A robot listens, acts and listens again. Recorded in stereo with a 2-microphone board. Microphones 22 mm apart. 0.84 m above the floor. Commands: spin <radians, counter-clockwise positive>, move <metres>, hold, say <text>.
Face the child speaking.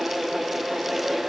hold
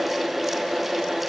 hold
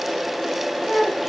spin 1.57
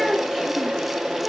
spin -0.17
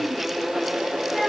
say Facing the child speaking.